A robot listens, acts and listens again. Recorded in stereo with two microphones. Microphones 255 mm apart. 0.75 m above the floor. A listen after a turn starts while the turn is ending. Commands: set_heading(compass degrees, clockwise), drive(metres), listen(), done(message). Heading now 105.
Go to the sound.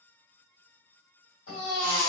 set_heading(15)
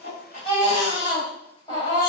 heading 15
set_heading(0)
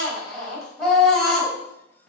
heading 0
drive(1.0)
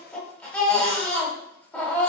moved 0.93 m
drive(1.0)
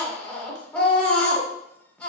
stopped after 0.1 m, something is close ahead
done("Arrived at the baby crying, straight ahead.")